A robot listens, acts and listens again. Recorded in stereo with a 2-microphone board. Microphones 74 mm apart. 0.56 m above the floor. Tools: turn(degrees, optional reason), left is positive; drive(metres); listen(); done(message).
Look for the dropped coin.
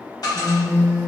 turn(degrees=60, reason="The dropped coin: about 60° left or 120° left.")
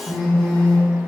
listen()
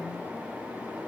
done("I heard a dropped coin, but can't make it out now. It was about straight ahead or 60° left.")